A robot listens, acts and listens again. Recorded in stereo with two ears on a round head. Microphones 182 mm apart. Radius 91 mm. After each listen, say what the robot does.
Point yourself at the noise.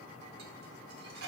Turn 55° right.
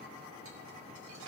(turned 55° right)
Turn 70° right.
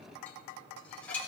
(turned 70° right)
Turn 10° left.
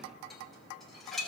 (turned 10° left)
Facing the dishes clattering, 1 to 2 m away.